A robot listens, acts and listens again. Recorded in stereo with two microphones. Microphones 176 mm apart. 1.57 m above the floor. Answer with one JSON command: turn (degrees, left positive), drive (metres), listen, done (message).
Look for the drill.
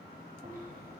{"listen": true}
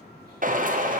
{"turn": -50}
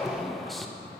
{"done": "Found it: a drill, straight ahead."}